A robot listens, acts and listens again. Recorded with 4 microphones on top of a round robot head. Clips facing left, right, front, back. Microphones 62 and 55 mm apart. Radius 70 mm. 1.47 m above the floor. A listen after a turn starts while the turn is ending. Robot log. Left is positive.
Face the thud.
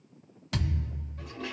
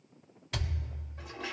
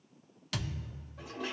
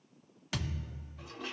note: The thud: 115° left.
cmd yaw +115
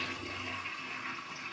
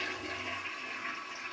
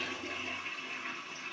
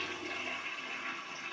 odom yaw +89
note: Nothing new. It was at 25° left.
cmd yaw +25
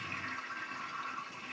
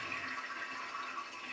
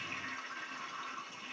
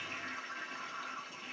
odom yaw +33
note: Nothing new. It was at 10° right.
cmd yaw -10
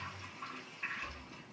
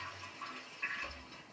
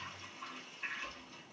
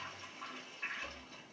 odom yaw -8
end: Facing where the thud came from. I can't hear it now.